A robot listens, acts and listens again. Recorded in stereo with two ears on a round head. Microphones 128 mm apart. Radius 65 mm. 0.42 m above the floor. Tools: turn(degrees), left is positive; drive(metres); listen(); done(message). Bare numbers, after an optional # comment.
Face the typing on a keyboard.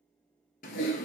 # The typing on a keyboard: about 70° left or 110° left.
turn(70)
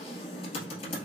# So it is at 40° left.
turn(40)
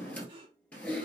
# The typing on a keyboard is now 10° left.
turn(10)
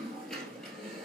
done("Facing the typing on a keyboard.")